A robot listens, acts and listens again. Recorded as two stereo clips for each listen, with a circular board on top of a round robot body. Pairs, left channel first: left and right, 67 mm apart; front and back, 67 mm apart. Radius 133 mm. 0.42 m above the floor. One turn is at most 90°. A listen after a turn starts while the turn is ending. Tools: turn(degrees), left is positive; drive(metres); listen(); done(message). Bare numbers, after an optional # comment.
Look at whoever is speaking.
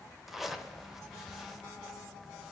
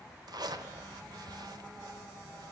listen()
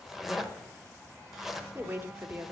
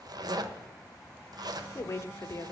# The woman speaking: 40° right.
turn(-40)
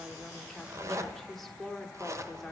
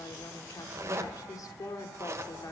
done("Found it: a woman speaking, straight ahead, 1 to 2 m away.")